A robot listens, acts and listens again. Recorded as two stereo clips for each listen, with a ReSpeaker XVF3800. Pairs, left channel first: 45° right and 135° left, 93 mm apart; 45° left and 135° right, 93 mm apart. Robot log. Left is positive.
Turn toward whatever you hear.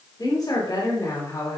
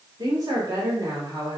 note: The woman speaking: 100° right.
cmd yaw -100
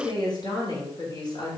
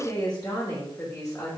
note: The woman speaking is now 10° right.
cmd yaw -10
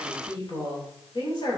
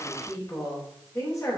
note: The woman speaking is now 10° right.
cmd yaw -10
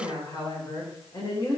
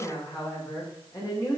end: Found it: a woman speaking, straight ahead, 2 to 4 m away.